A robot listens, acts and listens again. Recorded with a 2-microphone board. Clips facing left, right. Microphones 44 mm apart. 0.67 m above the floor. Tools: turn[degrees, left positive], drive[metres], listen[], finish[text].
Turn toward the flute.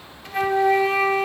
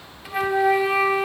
Action: turn[-30]
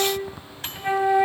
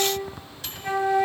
Thought: So it is at 20° left.
Action: turn[20]
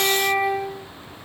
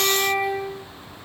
Action: finish[Found it: a flute, straight ahead, under 1 m away.]